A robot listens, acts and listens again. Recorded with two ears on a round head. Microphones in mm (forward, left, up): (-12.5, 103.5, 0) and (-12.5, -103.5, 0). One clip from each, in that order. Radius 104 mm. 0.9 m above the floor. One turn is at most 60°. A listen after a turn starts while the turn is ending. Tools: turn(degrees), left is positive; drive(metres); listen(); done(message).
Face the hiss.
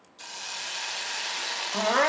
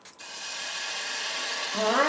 turn(degrees=20)
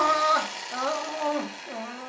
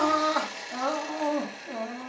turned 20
turn(degrees=60)
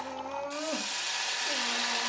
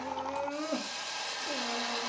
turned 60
turn(degrees=60)
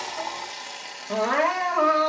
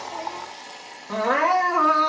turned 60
turn(degrees=50)
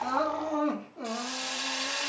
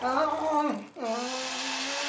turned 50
done("Facing the hiss.")